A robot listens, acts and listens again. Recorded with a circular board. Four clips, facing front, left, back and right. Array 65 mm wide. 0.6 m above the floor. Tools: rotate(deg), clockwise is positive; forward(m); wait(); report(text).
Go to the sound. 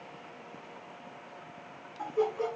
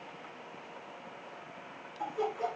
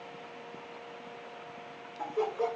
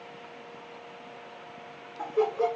rotate(105)
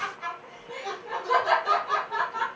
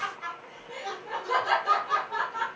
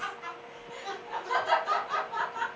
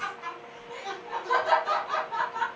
forward(1.0)
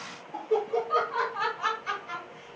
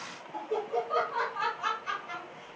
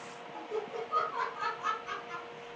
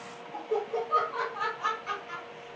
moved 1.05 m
forward(1.0)
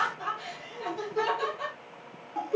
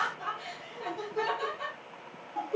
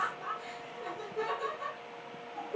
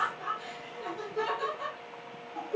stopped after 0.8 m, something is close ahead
report("I am next to the laughter.")